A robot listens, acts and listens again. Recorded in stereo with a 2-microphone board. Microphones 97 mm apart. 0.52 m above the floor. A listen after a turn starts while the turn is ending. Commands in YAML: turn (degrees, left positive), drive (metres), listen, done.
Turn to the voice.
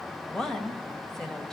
turn: 30
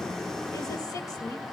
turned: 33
listen: true
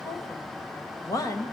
turn: 140
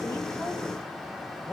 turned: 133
turn: 10
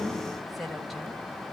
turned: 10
listen: true
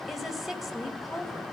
done: "Facing the woman speaking, 2 to 4 m away."